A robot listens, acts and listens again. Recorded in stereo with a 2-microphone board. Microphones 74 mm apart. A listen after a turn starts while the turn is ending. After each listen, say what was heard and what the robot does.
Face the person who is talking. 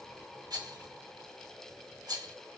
Keep listening.
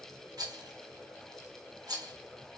Keep listening.
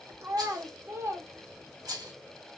The child speaking: about 35° right or 145° right. Turn 35° right.
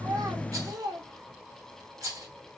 So it is at 110° right. Turn 110° right.
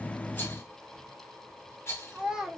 The child speaking is now 10° right. Turn 10° right.
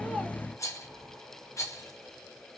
Keep listening.
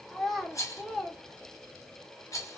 Found it: a child speaking, straight ahead.